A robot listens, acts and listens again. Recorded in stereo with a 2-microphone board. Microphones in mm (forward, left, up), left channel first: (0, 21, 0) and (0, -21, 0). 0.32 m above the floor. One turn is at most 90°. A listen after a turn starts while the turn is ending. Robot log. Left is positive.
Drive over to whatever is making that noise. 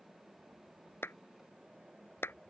note: The clap: about 70° left or 110° left.
cmd yaw +70
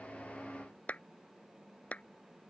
note: So it is at 35° left.
cmd yaw +35
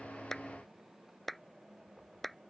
cmd fwd 1.0
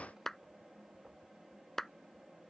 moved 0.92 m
note: The clap is now 10° left.
cmd yaw +10
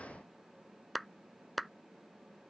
cmd fwd 1.0
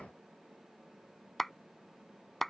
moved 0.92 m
cmd fwd 1.0
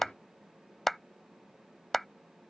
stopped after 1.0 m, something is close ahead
end: I am next to the clap.